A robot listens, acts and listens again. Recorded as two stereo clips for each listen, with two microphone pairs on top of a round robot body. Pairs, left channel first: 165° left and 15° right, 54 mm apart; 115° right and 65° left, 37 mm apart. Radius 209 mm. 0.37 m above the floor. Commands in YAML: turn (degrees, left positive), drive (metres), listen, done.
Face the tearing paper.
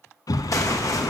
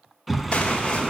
turn: -175
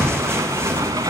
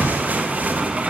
turn: 25
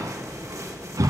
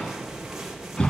turn: -10
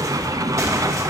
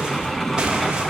done: "Found it: tearing paper, straight ahead."